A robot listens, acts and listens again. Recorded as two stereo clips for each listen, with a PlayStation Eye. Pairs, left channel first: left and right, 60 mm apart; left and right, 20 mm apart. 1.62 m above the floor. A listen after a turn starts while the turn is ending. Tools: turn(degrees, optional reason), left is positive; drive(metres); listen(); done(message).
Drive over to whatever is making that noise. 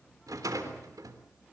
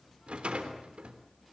turn(degrees=-90)
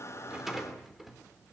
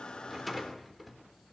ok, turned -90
drive(metres=1.0)
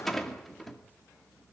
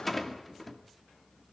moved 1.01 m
drive(metres=1.0)
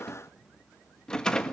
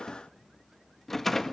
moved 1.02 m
turn(degrees=15, reason="The rattle is now 15° left.")
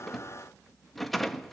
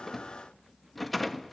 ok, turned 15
drive(metres=1.0)
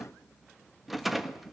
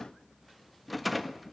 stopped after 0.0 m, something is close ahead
done("Arrived at the rattle, straight ahead.")